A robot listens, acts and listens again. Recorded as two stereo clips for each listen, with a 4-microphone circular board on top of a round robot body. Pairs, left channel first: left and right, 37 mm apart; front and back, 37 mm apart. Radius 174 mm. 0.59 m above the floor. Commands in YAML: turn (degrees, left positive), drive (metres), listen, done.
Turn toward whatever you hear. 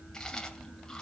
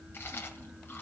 turn: 15
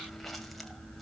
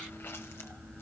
listen: true
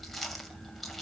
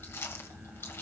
done: "Facing the chewing, 2 to 4 m away."